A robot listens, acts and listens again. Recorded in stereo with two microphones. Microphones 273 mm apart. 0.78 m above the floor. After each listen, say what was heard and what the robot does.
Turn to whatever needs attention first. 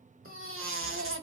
The baby crying: about 50° right or 130° right. Turn 50° right.
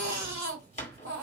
So it is at 75° right. Turn 75° right.
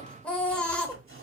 Found it: a baby crying, straight ahead, 1 to 2 m away.